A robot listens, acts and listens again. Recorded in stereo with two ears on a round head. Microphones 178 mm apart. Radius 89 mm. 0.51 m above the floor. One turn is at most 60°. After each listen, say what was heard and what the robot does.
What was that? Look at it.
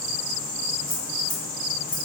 Turn 30° left.
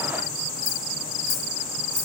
Turn 30° left.
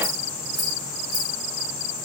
Facing the keys jangling, 1 to 2 m away.